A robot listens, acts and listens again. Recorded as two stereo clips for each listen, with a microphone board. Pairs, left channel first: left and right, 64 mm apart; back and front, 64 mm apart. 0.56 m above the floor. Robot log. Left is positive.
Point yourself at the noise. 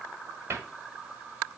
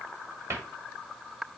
note: The cupboard door: 40° right.
cmd yaw -40
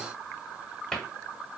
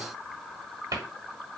note: The cupboard door is now 15° left.
cmd yaw +15
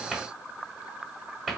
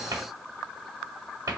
end: Facing the cupboard door, 1 to 2 m away.